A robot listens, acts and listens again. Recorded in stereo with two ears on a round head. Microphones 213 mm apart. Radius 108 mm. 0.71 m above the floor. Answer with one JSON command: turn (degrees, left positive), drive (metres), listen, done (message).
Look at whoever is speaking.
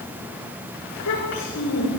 {"turn": 90}
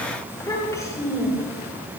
{"turn": 15}
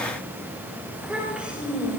{"done": "Facing the child speaking, over 4 m away."}